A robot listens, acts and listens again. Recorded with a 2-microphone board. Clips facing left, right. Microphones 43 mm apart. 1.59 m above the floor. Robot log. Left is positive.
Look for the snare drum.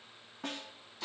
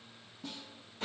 note: The snare drum: about 55° left or 125° left.
cmd yaw +55
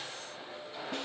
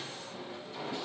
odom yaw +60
cmd idle
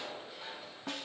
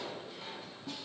note: So it is at 60° left.
cmd yaw +60
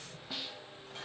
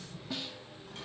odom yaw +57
end: Facing the snare drum, under 1 m away.